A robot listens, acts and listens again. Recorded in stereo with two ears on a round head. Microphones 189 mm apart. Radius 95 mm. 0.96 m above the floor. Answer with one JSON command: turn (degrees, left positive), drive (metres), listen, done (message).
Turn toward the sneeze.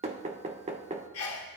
{"turn": 90}
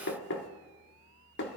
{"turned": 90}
{"done": "I heard a sneeze from this way, but can't make it out now."}